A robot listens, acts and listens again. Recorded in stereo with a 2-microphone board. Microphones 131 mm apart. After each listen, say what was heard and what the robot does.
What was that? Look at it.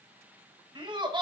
The laughter: about 40° right or 140° right. Turn 40° right.
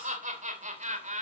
So it is at 110° right. Turn 110° right.
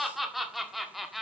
Found it: laughter, straight ahead, 1 to 2 m away.